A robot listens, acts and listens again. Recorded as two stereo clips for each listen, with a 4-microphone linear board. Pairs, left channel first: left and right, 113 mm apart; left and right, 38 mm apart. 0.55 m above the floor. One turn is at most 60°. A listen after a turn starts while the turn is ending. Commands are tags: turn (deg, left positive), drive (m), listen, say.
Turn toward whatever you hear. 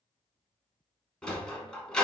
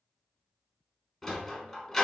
<turn deg="30"/>
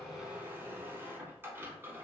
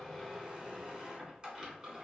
<turn deg="-20"/>
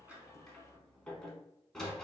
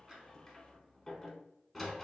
<say>Found it: a sliding door, straight ahead.</say>